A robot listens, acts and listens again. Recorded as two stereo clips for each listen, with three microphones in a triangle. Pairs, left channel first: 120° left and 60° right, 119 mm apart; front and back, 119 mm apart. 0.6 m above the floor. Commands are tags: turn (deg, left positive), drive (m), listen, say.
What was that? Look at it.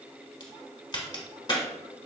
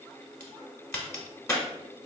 <turn deg="65"/>
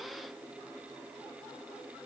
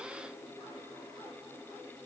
<say>Facing where the crack came from. I can't hear it now.</say>